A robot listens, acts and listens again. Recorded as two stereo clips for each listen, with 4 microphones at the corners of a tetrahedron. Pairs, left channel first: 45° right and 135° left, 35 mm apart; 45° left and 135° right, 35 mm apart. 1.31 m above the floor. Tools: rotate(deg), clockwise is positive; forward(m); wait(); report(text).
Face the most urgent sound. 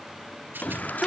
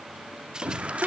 rotate(80)
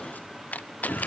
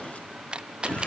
report("Found it: a shout, straight ahead, 2 to 4 m away.")